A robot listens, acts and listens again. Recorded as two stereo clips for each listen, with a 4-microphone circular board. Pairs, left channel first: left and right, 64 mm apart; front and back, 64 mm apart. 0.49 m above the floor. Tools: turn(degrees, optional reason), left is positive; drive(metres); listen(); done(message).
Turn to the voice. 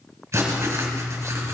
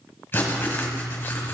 listen()
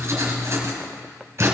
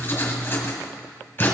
listen()
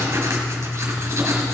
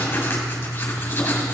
done("I can't make out anyone speaking, only writing.")